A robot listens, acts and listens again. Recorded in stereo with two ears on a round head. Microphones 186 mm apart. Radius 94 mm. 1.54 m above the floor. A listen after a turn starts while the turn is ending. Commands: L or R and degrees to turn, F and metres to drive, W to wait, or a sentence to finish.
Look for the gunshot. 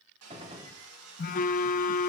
R25
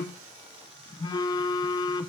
W
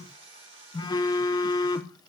I heard a gunshot, but can't make it out now. It was about straight ahead or 130° right.